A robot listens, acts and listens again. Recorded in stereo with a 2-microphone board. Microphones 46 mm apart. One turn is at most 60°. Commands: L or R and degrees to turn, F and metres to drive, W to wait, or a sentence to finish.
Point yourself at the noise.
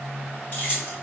L45
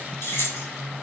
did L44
L60
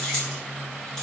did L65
L15
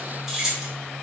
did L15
Found it: keys jangling, straight ahead.